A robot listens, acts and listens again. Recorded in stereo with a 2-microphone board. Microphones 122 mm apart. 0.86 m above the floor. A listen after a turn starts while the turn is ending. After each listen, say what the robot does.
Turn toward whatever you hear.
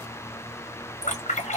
Turn 90° left.
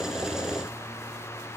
I heard a splash from this way, but can't make it out now.